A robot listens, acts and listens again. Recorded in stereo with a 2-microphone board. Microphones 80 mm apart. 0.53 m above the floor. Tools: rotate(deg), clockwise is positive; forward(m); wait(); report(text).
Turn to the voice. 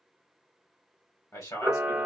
rotate(-45)
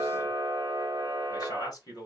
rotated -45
rotate(-75)
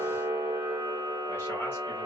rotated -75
wait()
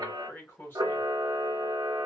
rotate(-35)
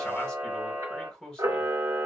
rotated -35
rotate(-10)
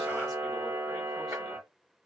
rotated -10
wait()
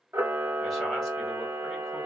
wait()
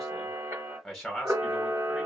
report("Found it: a man speaking, straight ahead, 1 to 2 m away.")